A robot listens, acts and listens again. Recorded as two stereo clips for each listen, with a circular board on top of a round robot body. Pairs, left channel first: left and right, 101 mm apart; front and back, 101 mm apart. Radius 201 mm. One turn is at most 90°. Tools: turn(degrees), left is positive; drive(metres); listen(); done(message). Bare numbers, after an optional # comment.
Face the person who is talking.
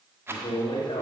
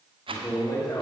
# The man speaking: 55° left.
turn(55)
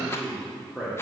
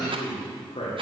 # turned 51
# The man speaking is now 10° right.
turn(-10)
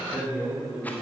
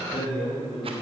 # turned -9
# The man speaking is now 10° right.
turn(-10)
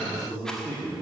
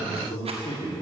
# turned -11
# The man speaking is now 10° right.
turn(-10)
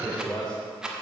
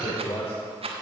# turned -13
done("Facing the man speaking, 2 to 4 m away.")